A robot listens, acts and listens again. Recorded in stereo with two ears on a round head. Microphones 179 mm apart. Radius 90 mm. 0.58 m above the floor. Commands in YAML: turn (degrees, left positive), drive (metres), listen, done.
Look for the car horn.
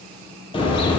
turn: 25
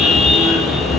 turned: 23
done: "Facing the car horn."